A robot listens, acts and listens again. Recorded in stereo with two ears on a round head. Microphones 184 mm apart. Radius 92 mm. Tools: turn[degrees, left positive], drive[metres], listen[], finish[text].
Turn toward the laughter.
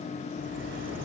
Action: listen[]
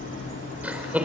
Action: turn[-30]
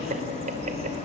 Thought: So it is at 140° right.
Action: turn[-140]
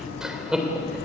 Action: finish[Facing the laughter, 2 to 4 m away.]